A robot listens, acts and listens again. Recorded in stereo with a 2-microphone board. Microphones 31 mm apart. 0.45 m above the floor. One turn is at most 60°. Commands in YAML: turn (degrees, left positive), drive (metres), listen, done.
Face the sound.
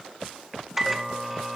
turn: -30
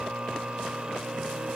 turn: -60
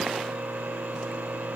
turn: -60
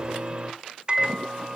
turn: -35
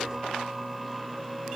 done: "Facing the microwave."